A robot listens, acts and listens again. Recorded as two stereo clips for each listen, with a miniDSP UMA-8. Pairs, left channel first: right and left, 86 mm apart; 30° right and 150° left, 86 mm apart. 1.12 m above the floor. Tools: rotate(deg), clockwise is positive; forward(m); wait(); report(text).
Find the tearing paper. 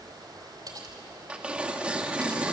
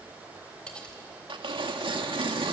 rotate(-165)
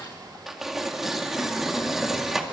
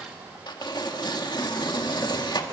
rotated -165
report("Found it: tearing paper, straight ahead, 1 to 2 m away.")